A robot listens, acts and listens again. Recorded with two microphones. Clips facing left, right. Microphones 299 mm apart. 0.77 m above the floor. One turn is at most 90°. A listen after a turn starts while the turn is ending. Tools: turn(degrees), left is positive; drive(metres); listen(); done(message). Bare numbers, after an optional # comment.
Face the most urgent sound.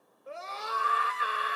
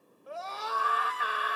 # The scream: about 30° left or 150° left.
turn(30)
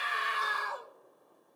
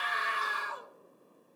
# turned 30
# So it is at 115° left.
turn(90)
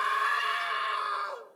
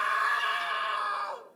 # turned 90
# The scream is now 30° left.
turn(30)
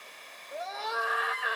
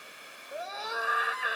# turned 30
done("Found it: a scream, straight ahead, 1 to 2 m away.")